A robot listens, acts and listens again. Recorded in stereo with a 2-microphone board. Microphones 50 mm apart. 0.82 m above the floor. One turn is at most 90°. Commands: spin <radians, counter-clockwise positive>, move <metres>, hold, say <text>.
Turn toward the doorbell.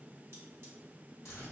hold
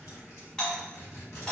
spin 0.26
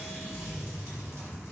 hold
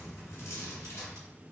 hold
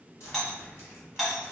say Facing the doorbell, 1 to 2 m away.